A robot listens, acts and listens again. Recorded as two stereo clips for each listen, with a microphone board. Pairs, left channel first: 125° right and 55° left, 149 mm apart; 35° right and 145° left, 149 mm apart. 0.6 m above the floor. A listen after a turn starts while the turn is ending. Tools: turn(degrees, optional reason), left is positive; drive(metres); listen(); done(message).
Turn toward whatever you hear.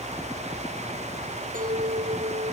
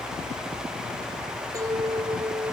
turn(degrees=80, reason="The clink: 80° left.")
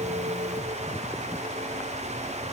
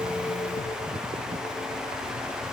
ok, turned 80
listen()
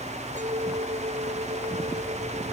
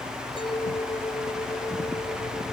turn(degrees=20, reason="The clink is now 20° left.")
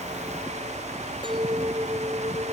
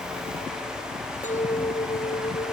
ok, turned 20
done("Facing the clink.")